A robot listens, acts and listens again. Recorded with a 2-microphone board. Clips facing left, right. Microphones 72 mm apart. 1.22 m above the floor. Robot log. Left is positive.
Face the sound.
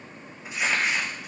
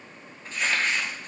cmd yaw +30
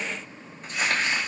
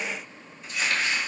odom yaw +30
note: So it is at 135° left.
cmd yaw +135
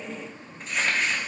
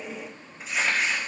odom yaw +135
end: Found it: crumpling, straight ahead, 1 to 2 m away.